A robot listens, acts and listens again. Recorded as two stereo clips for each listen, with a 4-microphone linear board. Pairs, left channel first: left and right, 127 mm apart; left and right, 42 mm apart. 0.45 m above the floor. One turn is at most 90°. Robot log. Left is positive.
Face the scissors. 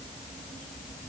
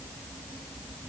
cmd idle
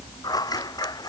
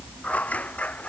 note: The scissors: about 30° left or 150° left.
cmd yaw +30
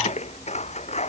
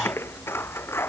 note: So it is at 120° left.
cmd yaw +90
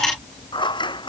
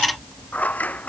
note: The scissors is now 35° left.
cmd yaw +35
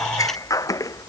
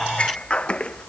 note: The scissors is now 25° left.
cmd yaw +25
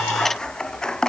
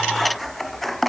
end: Found it: scissors, straight ahead.